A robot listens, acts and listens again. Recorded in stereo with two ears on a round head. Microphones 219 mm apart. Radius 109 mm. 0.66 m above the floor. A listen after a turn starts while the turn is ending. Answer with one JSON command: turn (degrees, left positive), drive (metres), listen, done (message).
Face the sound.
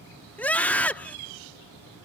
{"turn": 30}
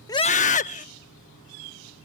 {"turn": 145}
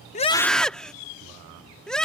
{"done": "Found it: a scream, straight ahead."}